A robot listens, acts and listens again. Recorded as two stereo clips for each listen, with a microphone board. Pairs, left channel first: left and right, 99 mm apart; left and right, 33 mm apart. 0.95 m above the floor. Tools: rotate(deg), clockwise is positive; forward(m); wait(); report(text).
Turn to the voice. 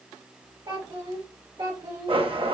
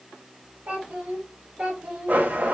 rotate(55)
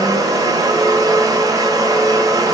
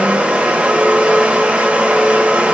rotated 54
wait()
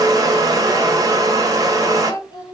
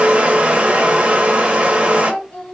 rotate(-45)
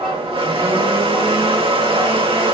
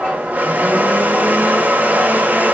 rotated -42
wait()
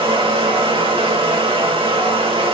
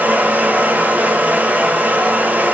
wait()
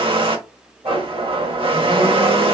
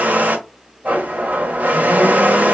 report("Facing where the child speaking came from. I can't hear it now.")